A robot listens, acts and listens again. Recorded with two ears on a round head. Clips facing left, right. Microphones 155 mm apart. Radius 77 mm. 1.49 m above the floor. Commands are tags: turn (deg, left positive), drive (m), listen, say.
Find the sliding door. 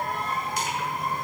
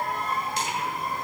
<listen/>
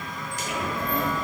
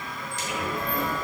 <turn deg="20"/>
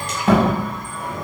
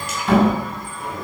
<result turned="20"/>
<turn deg="140"/>
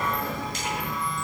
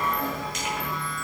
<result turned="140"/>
<turn deg="-15"/>
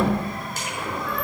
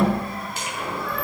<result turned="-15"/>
<turn deg="-10"/>
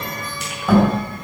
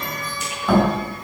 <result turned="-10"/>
<say>Facing the sliding door, over 4 m away.</say>